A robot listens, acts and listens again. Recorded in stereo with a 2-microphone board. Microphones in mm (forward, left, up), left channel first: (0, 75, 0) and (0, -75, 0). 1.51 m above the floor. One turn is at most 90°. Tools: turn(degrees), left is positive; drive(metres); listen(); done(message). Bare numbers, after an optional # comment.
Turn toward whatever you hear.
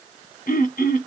# The throat clearing: about 65° left or 115° left.
turn(65)
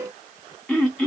done("Found it: throat clearing, straight ahead, 1 to 2 m away.")